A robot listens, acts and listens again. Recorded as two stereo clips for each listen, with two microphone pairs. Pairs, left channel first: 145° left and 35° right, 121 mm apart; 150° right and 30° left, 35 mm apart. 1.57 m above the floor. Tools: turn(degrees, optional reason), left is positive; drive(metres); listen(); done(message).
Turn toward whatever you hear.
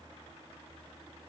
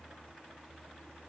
listen()
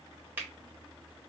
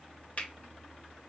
turn(degrees=-110, reason="The finger snap: 110° right.")
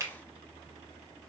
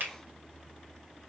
turn(degrees=25, reason="The finger snap is now 25° left.")
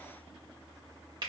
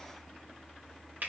turn(degrees=10, reason="The finger snap is now 10° left.")
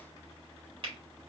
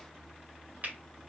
done("Facing the finger snap.")